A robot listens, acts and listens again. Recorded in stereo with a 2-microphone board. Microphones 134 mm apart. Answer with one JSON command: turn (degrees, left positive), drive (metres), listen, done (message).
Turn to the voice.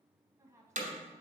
{"turn": -20}
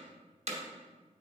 {"listen": true}
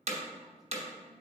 {"listen": true}
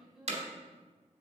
{"done": "Facing the woman speaking."}